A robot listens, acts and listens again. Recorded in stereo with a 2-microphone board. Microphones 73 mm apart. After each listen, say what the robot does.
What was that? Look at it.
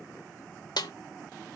Turn 70° left.
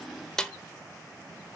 Turn 10° left.
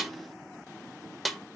Facing the snare drum, 1 to 2 m away.